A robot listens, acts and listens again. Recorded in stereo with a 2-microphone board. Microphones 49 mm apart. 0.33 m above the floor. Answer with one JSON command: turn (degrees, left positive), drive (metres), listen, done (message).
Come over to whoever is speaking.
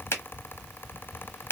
{"listen": true}
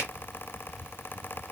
{"listen": true}
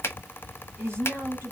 {"turn": -55}
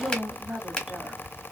{"turn": -10}
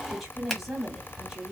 {"drive": 1.0}
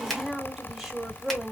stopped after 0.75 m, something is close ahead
{"done": "Arrived at the woman speaking, straight ahead."}